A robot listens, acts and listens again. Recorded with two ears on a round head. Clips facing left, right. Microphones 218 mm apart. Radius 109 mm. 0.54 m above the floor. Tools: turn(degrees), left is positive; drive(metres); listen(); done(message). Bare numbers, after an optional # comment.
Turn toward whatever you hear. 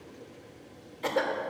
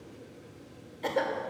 turn(30)
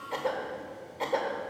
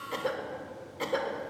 # So it is at 25° right.
turn(-25)
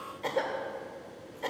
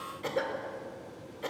# The cough is now 15° right.
turn(-15)
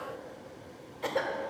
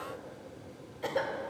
done("Found it: a cough, straight ahead, 1 to 2 m away.")